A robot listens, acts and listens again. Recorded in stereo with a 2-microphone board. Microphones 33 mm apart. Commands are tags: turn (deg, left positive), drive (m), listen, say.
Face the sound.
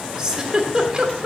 <turn deg="-20"/>
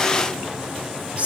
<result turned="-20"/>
<turn deg="-140"/>
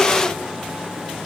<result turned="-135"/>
<listen/>
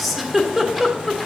<say>Found it: a giggle, straight ahead, 1 to 2 m away.</say>